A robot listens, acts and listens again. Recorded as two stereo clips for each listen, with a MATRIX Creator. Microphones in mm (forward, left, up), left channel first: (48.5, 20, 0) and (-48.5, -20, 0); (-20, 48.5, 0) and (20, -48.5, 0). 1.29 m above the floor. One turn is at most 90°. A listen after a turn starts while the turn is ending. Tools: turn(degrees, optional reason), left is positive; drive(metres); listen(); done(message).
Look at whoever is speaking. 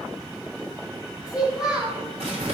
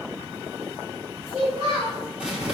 turn(degrees=-75, reason="The child speaking: 75° right.")
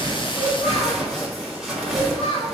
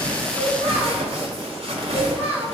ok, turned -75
done("Found it: a child speaking, straight ahead, 2 to 4 m away.")